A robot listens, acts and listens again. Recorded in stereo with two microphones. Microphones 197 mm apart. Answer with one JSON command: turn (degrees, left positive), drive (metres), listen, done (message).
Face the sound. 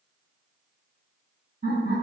{"turn": -50}
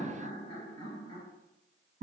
{"turn": -60}
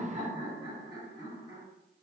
{"turn": -25}
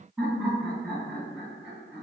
{"turn": -10}
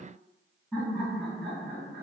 {"done": "Found it: laughter, straight ahead, 1 to 2 m away."}